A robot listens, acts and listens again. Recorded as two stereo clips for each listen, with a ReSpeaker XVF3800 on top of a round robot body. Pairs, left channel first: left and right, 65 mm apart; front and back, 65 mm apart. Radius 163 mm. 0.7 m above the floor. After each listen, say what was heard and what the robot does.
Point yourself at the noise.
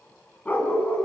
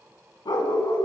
The dog barking: 20° left. Turn 20° left.
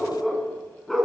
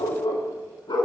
Facing the dog barking.